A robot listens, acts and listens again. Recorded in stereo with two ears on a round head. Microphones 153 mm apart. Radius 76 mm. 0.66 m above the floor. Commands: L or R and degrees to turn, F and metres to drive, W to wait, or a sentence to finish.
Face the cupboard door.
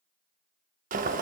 W
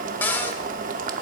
L30
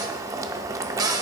R20
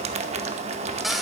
W
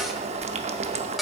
Facing the cupboard door.